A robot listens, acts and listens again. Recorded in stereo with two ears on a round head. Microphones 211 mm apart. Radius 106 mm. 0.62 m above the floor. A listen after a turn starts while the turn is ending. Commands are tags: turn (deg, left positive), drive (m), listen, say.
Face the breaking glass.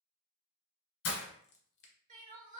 <turn deg="60"/>
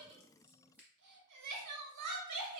<listen/>
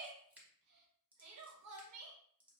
<say>I heard breaking glass, but can't make it out now. It was about straight ahead or 60° left.</say>